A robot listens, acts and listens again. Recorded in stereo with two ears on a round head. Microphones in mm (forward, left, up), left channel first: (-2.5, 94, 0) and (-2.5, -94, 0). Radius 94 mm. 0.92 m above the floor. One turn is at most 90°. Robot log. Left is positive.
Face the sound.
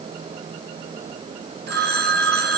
note: The phone ringing: about 50° right or 130° right.
cmd yaw -50
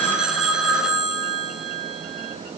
end: Found it: a phone ringing, straight ahead, 2 to 4 m away.